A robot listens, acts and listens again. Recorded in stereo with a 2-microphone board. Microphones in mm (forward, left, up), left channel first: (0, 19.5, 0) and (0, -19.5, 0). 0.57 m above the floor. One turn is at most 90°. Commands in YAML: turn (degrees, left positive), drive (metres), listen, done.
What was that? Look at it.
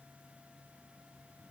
listen: true
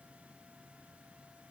listen: true
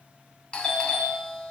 turn: 30
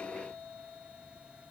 listen: true
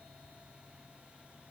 listen: true
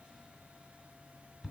done: "Found it: a doorbell, straight ahead, 1 to 2 m away."